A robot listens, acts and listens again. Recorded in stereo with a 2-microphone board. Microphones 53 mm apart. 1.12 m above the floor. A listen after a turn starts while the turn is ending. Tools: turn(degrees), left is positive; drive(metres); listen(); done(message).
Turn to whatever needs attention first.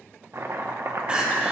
turn(degrees=-20)
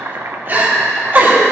turn(degrees=-135)
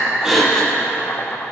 turn(degrees=20)
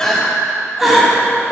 done("Found it: crying, straight ahead.")